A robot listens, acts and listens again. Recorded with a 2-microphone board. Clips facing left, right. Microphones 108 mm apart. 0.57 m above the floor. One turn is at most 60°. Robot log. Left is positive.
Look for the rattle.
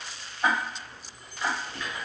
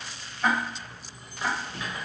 note: The rattle: about 20° right or 160° right.
cmd yaw -20
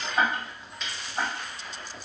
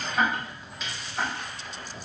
end: Facing the rattle.